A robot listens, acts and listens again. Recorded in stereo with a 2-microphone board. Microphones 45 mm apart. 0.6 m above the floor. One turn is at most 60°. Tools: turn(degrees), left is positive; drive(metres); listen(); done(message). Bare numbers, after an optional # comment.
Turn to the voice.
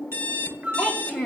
# The child speaking: about 25° right or 155° right.
turn(-25)
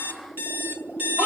listen()
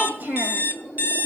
# So it is at 130° right.
turn(-60)
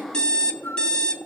# Nothing new. It was at 70° right.
turn(-60)
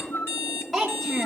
done("Found it: a child speaking, straight ahead, 2 to 4 m away.")